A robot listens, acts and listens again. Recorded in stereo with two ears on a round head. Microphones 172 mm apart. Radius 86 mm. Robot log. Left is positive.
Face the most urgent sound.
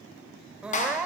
cmd yaw -30
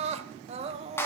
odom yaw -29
note: So it is at 145° right.
cmd yaw -145
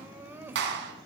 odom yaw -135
note: The crying is now 10° right.
cmd yaw -10
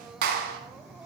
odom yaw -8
cmd idle
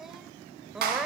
end: Found it: crying, straight ahead.